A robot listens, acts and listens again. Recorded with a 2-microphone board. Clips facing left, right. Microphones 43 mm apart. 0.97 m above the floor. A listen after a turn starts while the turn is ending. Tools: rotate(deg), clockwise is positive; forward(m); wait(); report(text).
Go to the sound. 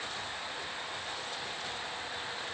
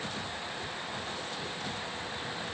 wait()
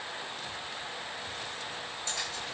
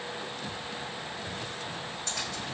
rotate(75)
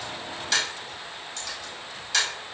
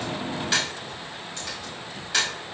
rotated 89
rotate(20)
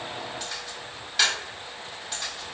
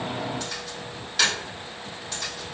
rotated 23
forward(1.0)
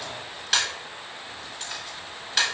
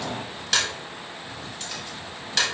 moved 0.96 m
forward(1.0)
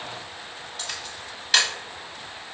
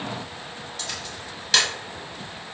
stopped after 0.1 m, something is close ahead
rotate(-10)
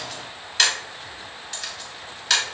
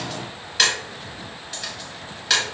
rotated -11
report("Arrived at the camera shutter, straight ahead.")